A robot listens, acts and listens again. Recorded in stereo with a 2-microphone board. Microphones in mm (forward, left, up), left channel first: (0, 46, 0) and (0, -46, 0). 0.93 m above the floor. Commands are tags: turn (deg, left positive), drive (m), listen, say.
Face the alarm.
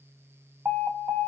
<turn deg="-15"/>
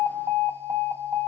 <turn deg="-150"/>
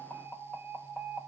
<say>Found it: an alarm, straight ahead, 1 to 2 m away.</say>